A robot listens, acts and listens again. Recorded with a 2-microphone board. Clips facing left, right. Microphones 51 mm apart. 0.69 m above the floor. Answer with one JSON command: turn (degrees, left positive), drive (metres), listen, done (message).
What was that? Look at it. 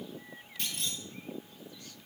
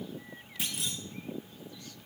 {"turn": -30}
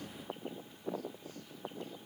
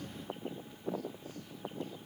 {"listen": true}
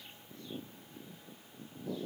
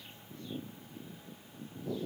{"done": "I heard a clunk, but can't make it out now. It was about 25° left or 145° right."}